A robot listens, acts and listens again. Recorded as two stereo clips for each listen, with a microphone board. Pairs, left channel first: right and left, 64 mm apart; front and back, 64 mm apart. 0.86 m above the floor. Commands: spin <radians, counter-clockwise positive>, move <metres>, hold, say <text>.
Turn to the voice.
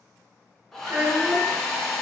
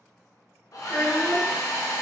spin 0.44
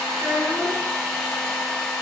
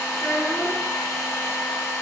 spin 0.35
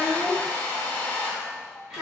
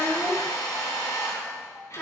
say Found it: a child speaking, straight ahead, 1 to 2 m away.